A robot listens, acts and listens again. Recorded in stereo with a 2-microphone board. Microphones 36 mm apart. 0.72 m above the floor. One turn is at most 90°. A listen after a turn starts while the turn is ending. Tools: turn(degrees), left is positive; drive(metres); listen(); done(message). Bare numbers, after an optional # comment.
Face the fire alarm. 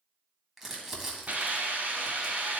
listen()
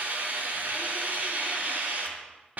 listen()
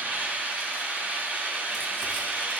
done("I can't make out a fire alarm to turn to.")